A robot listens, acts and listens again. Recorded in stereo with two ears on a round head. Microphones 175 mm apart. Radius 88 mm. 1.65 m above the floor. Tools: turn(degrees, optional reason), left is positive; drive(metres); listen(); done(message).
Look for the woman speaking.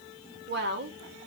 turn(degrees=-55, reason="The woman speaking: about 55° right or 125° right.")
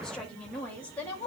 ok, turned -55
turn(degrees=10, reason="So it is at 10° left.")
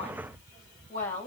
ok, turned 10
turn(degrees=10, reason="The woman speaking is now 10° left.")
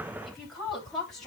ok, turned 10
done("Facing the woman speaking.")